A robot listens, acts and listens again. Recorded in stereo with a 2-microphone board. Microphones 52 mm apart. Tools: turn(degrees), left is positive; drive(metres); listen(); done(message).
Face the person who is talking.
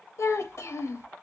turn(degrees=60)
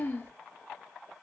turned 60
turn(degrees=55)
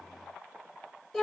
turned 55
turn(degrees=15)
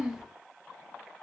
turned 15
done("Facing the child speaking, under 1 m away.")